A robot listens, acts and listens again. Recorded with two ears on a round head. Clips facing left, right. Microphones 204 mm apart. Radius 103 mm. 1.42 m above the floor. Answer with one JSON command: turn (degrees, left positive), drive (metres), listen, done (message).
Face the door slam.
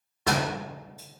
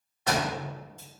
{"turn": 65}
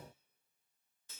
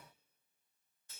{"listen": true}
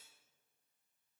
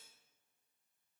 {"done": "I heard a door slam, but can't make it out now. It was about straight ahead or 50° left."}